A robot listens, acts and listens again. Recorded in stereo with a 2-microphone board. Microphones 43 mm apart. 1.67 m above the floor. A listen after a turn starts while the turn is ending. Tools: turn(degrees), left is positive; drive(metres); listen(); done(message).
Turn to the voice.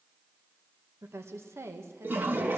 turn(degrees=-90)
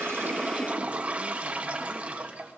listen()
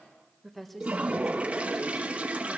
done("Facing the woman speaking.")